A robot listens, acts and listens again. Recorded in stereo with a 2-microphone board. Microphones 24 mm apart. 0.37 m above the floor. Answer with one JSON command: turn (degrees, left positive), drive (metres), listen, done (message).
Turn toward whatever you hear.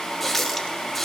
{"turn": 30}
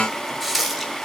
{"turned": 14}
{"turn": -10}
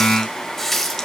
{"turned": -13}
{"done": "Found it: a running tap, straight ahead, 1 to 2 m away."}